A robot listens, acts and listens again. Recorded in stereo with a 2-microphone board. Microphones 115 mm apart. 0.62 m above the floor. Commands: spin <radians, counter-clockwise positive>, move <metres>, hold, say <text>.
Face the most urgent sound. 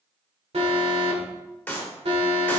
spin -1.05
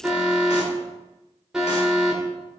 say Found it: an alarm, straight ahead.